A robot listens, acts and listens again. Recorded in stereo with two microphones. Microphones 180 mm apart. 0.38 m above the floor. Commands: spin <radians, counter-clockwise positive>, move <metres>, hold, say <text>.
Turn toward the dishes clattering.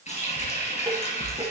spin -0.44
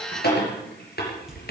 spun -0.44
say Found it: dishes clattering, straight ahead.